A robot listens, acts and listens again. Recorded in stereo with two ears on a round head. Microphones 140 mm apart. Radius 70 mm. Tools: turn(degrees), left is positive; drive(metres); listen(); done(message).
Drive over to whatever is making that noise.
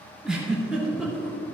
turn(degrees=-30)
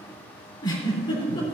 turn(degrees=30)
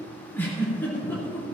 turn(degrees=15)
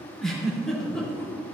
drive(metres=1.0)
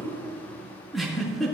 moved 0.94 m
drive(metres=1.0)
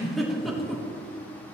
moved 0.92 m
drive(metres=1.0)
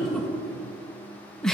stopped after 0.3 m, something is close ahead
done("I am next to the giggle.")